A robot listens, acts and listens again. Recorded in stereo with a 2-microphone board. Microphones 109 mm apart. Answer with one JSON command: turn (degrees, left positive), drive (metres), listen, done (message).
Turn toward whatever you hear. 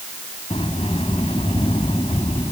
{"turn": 75}
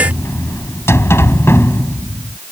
{"turn": 25}
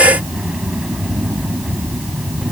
{"done": "Found it: a sliding door, straight ahead."}